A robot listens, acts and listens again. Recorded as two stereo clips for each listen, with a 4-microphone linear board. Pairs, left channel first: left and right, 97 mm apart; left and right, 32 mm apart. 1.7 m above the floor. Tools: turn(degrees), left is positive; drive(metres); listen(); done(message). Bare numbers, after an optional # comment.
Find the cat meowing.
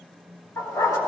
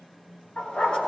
listen()
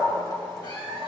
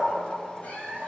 # The cat meowing: about 65° left or 115° left.
turn(65)
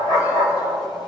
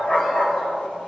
listen()
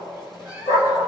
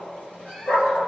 # So it is at 40° left.
turn(40)
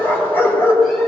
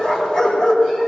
listen()
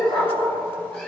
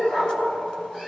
listen()
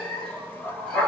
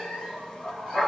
# The cat meowing is now 10° left.
turn(10)
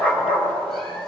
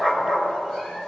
listen()
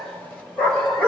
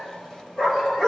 listen()
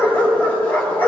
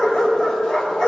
done("I heard a cat meowing from this way, but can't make it out now.")